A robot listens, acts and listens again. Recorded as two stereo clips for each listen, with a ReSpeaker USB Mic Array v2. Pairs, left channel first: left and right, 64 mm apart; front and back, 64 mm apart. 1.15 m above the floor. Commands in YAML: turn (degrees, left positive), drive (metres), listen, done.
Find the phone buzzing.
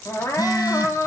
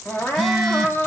turn: 90
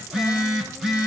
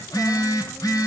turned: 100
turn: -10
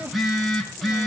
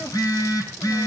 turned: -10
done: "Found it: a phone buzzing, straight ahead, over 4 m away."